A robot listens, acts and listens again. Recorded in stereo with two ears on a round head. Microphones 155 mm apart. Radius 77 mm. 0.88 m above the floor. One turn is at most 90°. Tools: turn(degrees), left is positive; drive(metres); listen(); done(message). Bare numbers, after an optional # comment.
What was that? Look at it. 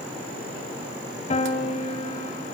# The piano: about 40° left or 140° left.
turn(40)
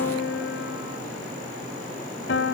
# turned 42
# So it is at 100° left.
turn(90)
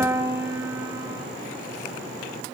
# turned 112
# The piano is now 15° right.
turn(-15)
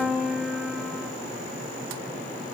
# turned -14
done("Facing the piano, 1 to 2 m away.")